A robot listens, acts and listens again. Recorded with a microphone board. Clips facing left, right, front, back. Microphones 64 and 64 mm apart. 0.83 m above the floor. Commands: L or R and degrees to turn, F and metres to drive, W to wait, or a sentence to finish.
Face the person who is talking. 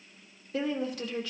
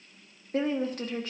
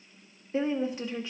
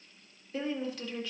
R65
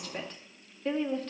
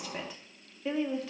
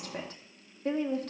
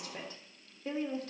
Facing the woman speaking.